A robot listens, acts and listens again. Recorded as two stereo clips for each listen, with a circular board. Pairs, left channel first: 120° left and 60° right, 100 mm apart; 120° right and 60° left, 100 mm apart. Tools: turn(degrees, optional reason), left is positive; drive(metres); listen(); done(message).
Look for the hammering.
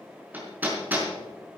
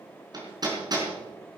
turn(degrees=10, reason="The hammering: 10° left.")
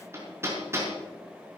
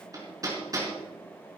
done("Facing the hammering, over 4 m away.")